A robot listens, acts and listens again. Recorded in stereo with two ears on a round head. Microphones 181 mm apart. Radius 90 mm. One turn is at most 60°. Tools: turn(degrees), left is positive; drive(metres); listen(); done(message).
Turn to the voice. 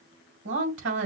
turn(degrees=-60)
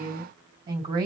turn(degrees=-25)
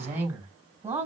turn(degrees=-15)
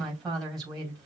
done("Facing the woman speaking, 2 to 4 m away.")